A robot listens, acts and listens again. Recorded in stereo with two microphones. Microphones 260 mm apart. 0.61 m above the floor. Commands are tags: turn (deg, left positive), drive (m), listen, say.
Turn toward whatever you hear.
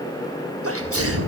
<turn deg="-60"/>
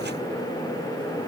<listen/>
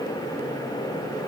<say>I heard a sneeze, but can't make it out now. It was about straight ahead or 60° right.</say>